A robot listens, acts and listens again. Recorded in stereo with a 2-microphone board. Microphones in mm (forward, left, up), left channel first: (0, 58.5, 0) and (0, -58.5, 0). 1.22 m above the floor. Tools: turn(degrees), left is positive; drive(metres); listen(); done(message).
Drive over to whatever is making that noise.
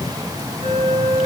turn(degrees=-60)
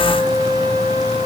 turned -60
turn(degrees=-55)
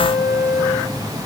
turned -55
drive(metres=1.0)
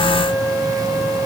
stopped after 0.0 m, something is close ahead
done("Something is in my way. I am facing the flute but have not reached it.")